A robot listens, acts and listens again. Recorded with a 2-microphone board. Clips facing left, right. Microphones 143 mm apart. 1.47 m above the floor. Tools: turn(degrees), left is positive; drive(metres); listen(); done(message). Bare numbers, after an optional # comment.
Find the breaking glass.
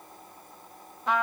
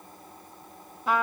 listen()
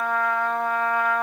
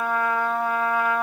listen()
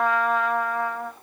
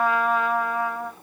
done("I can't make out breaking glass to turn to.")